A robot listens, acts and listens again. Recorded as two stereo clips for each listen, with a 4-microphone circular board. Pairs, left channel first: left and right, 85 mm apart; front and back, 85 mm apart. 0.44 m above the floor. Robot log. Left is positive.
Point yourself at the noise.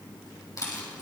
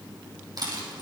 note: The rattle: 140° left.
cmd yaw +140
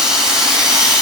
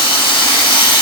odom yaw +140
note: The rattle is now 10° right.
cmd yaw -10
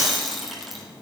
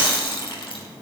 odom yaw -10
end: Facing the rattle.